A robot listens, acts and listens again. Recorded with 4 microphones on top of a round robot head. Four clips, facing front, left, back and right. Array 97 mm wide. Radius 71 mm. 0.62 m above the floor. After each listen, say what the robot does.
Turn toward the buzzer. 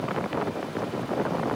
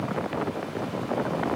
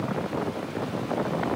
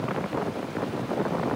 Keep listening.
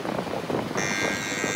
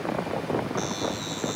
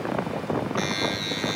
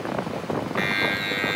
Turn 70° right.
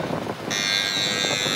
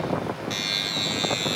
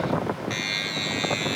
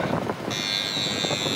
Found it: a buzzer, straight ahead.